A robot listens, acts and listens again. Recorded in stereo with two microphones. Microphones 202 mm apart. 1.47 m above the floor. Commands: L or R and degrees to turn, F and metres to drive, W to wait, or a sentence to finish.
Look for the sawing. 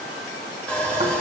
L30
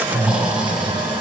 W
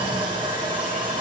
R25
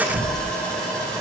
Facing the sawing.